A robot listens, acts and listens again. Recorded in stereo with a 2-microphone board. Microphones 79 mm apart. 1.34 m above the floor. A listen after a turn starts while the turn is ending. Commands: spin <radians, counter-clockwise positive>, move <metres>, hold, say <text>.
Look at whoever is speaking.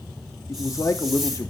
spin 0.79
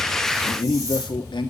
spin 1.57
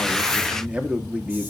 spin -0.26
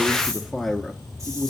say Found it: a man speaking, straight ahead.